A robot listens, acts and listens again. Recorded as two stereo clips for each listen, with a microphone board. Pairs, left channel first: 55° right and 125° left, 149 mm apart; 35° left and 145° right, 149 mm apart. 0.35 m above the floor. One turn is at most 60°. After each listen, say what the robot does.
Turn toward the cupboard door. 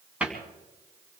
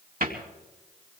Turn 60° right.
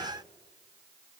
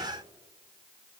Turn 60° right.
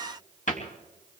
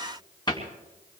Turn 25° right.
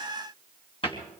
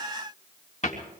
Found it: a cupboard door, straight ahead.